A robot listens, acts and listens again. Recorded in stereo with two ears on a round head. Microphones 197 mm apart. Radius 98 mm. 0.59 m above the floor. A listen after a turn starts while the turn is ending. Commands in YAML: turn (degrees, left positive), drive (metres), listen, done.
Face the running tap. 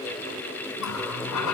turn: 90
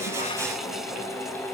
listen: true
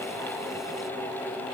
listen: true
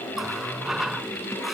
done: "Found it: a running tap, straight ahead."